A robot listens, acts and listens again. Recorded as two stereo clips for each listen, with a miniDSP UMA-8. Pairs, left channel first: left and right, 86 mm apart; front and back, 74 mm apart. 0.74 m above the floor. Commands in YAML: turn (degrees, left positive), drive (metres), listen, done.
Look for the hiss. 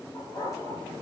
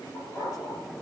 listen: true
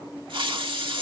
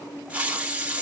turn: -105
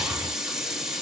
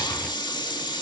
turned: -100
done: "Facing the hiss, 1 to 2 m away."